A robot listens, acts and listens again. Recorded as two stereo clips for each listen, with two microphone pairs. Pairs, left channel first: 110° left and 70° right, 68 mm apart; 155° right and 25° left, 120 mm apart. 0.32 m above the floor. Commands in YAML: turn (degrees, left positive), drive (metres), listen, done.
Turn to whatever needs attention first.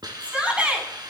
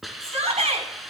done: "Found it: a shout, straight ahead."